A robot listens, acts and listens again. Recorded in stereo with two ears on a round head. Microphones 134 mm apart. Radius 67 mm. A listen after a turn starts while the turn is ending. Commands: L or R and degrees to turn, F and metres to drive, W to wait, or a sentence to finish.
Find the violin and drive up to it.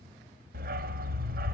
W
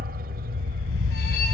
W
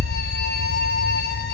I can't make out a violin to turn to.